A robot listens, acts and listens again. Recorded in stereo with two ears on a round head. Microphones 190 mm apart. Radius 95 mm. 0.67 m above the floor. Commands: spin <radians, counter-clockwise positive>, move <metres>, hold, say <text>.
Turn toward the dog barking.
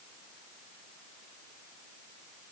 hold
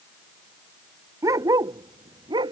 spin -0.35
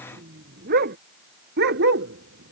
spin -2.18
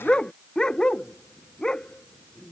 say Found it: a dog barking, straight ahead.